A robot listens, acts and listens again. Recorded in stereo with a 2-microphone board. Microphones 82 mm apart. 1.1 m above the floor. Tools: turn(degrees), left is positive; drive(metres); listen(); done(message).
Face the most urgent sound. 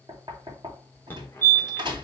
turn(degrees=25)
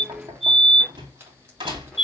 done("Found it: a fire alarm, straight ahead, 1 to 2 m away.")